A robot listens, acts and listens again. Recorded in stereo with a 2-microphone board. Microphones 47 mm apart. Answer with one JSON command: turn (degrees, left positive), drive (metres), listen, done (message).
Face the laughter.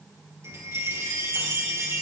{"listen": true}
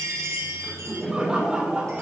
{"turn": -20}
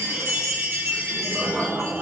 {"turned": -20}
{"turn": -40}
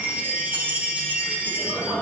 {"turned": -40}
{"turn": -110}
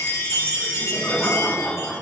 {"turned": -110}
{"turn": 25}
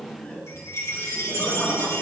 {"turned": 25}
{"turn": 15}
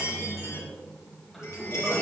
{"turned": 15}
{"done": "Found it: laughter, straight ahead, over 4 m away."}